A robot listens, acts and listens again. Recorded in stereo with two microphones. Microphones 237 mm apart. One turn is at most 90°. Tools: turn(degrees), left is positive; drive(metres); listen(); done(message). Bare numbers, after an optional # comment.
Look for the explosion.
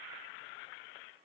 listen()
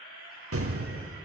turn(-90)
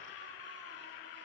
done("Facing where the explosion came from. I can't hear it now.")